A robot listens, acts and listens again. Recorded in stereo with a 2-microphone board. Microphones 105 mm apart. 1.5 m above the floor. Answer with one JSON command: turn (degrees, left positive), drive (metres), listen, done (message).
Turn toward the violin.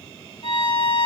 {"turn": 55}
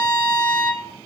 {"done": "Found it: a violin, straight ahead."}